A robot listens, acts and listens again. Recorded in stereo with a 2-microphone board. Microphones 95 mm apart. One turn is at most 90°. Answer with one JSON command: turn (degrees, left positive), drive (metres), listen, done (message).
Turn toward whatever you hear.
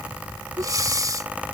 {"turn": -40}
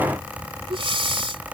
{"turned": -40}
{"turn": -90}
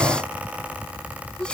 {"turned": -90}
{"turn": -10}
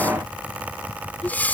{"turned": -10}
{"turn": 20}
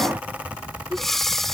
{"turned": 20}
{"done": "Facing the breathing."}